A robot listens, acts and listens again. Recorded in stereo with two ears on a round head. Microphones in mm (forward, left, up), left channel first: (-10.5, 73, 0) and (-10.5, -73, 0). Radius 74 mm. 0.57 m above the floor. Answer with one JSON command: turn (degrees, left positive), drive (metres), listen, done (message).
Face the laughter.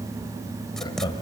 {"turn": 30}
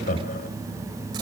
{"turn": 120}
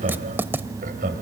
{"turn": -55}
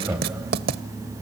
{"turn": -15}
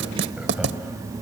{"listen": true}
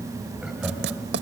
{"listen": true}
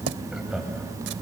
{"done": "Found it: laughter, straight ahead."}